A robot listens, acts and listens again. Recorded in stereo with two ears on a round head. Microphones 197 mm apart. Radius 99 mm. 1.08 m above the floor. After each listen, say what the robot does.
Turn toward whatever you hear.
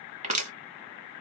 Turn 35° right.
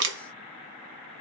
Turn 105° right.
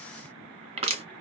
Turn 35° right.
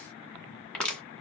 Facing the crushing.